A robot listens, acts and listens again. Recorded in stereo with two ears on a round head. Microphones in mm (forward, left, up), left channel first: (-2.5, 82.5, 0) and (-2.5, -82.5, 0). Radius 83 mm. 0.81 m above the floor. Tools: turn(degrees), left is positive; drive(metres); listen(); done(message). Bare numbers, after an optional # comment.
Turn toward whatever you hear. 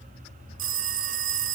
# The phone ringing: about 45° right or 135° right.
turn(-45)
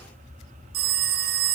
# So it is at 75° right.
turn(-75)
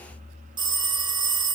# The phone ringing is now 30° right.
turn(-30)
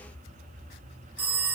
# The phone ringing is now 10° right.
turn(-10)
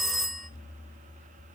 done("Facing the phone ringing, under 1 m away.")